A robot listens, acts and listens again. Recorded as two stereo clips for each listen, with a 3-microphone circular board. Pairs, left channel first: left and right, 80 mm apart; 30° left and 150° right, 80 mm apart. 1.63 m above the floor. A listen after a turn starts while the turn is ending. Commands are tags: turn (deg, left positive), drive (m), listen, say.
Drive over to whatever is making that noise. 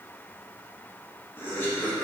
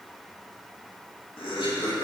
<turn deg="25"/>
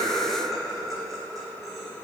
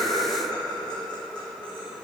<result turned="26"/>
<drive m="1.0"/>
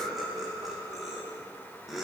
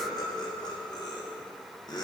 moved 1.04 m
<drive m="1.0"/>
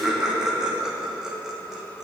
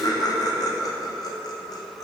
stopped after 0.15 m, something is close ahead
<say>I am next to the laughter.</say>